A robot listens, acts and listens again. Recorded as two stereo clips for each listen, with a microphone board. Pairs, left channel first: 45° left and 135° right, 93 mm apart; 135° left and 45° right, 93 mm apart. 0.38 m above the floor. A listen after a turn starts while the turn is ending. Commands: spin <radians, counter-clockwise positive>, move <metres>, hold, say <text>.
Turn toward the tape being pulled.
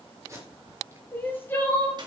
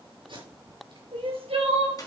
spin -1.31
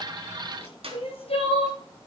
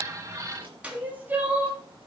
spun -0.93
spin -0.35
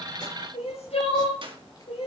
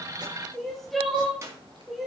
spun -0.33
hold
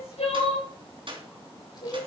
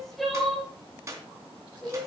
say Facing where the tape being pulled came from. I can't hear it now.